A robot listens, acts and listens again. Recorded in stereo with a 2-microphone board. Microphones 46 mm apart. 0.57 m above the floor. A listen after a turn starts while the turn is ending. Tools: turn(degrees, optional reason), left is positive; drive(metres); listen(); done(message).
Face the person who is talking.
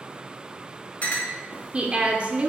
turn(degrees=-25, reason="The woman speaking: about 25° right or 155° right.")
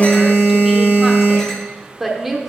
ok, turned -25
done("Found it: a woman speaking, straight ahead, 1 to 2 m away.")